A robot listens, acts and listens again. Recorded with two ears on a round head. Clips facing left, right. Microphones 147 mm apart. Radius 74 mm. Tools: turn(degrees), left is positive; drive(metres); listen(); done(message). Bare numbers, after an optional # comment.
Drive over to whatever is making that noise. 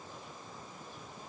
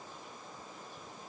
listen()
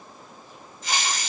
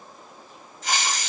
# The hiss: about 55° right or 125° right.
turn(-55)
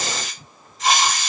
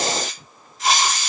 drive(1.0)
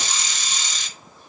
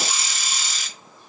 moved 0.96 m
drive(1.0)
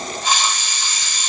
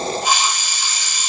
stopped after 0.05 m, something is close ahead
# The hiss is now 10° right.
turn(-10)
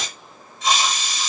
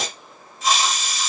done("I am next to the hiss.")